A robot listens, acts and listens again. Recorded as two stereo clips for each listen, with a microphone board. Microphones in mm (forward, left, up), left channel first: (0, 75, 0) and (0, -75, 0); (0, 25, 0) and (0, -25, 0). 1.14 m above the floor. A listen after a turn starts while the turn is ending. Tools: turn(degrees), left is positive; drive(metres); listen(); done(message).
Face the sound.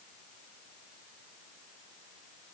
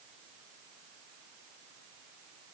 listen()
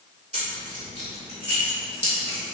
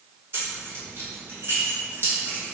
turn(degrees=-50)
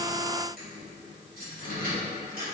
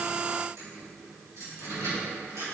turn(degrees=-80)
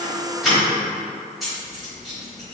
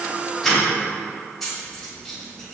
done("Found it: keys jangling, straight ahead.")